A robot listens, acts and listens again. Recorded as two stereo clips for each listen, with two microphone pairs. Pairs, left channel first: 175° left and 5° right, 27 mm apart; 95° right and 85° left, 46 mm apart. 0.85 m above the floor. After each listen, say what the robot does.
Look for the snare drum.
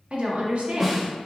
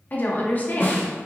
Turn 75° right.
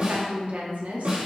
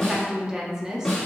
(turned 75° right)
Turn 20° right.
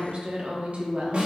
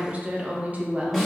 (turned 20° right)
Facing the snare drum, 1 to 2 m away.